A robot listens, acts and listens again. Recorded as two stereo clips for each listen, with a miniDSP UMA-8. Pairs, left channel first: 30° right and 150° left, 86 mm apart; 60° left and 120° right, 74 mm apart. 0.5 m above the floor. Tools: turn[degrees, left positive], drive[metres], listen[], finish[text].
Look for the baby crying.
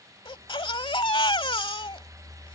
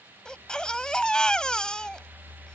Thought: The baby crying: 20° right.
Action: turn[-20]
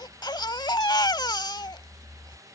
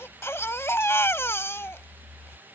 Action: finish[Found it: a baby crying, straight ahead.]